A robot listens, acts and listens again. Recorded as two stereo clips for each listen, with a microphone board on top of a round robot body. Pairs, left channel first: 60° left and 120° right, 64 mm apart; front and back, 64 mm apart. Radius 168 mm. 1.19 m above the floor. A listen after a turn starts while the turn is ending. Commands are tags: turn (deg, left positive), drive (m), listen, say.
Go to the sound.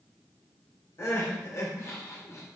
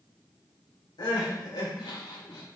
<turn deg="10"/>
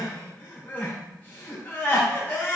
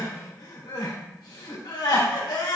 <drive m="1.0"/>
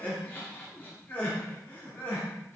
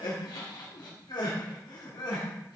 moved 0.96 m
<drive m="1.0"/>
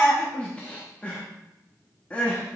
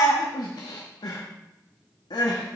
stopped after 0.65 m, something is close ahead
<turn deg="-15"/>
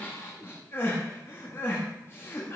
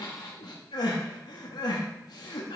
<say>Arrived at the crying, straight ahead.</say>